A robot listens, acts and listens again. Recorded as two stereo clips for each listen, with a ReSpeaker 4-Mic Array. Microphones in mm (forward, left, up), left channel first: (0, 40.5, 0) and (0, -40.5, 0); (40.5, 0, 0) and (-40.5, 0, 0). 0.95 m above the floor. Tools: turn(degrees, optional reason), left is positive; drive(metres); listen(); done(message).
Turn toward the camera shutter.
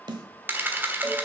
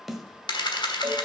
turn(degrees=-25, reason="The camera shutter: 25° right.")
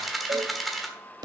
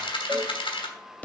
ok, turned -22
done("Found it: a camera shutter, straight ahead.")